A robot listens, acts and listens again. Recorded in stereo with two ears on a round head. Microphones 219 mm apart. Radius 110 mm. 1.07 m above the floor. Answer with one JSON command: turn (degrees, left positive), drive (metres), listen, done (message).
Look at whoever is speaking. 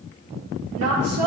{"turn": -70}
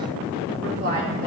{"turn": -40}
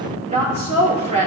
{"turn": -25}
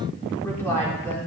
{"turn": 10}
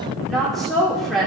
{"done": "Found it: a woman speaking, straight ahead, 2 to 4 m away."}